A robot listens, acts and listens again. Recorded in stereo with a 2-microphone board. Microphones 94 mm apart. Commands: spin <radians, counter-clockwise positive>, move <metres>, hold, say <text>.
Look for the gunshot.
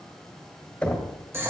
hold
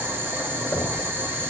hold
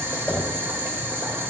say I can't make out a gunshot, only boiling and knocking.